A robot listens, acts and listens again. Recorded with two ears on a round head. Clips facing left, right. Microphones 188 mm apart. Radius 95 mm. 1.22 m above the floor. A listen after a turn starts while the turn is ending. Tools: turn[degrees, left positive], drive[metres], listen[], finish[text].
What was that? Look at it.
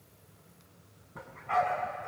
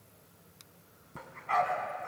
Thought: The dog barking: about 55° right or 125° right.
Action: turn[-55]
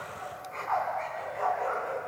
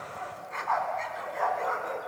Thought: So it is at 55° right.
Action: turn[-55]
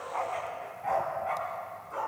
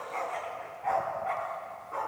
Action: finish[Found it: a dog barking, straight ahead.]